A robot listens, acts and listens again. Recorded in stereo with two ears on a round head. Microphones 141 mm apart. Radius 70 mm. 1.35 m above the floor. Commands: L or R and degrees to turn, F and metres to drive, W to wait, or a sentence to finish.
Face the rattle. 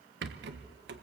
R90
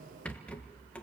L10
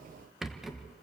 Found it: a rattle, straight ahead.